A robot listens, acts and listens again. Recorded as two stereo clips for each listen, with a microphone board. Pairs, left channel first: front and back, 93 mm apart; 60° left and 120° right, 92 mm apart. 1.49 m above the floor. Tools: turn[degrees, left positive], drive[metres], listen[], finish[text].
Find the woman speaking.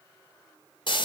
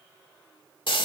Action: listen[]
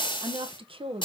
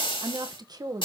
Thought: The woman speaking: 170° right.
Action: turn[-170]
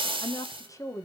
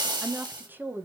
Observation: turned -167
Thought: The woman speaking is now 55° right.
Action: turn[-55]
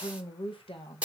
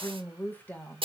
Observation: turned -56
Thought: The woman speaking is now 15° right.
Action: turn[-15]
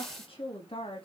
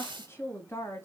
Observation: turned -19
Action: finish[Found it: a woman speaking, straight ahead, 2 to 4 m away.]